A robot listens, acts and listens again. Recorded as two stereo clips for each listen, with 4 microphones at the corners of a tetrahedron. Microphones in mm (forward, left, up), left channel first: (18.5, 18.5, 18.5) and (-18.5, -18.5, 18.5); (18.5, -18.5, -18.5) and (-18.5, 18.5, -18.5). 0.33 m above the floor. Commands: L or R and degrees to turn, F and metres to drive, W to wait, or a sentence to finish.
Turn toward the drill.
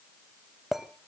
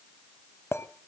W
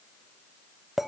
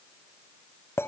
W
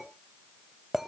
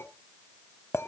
I can't make out a drill, only a clink.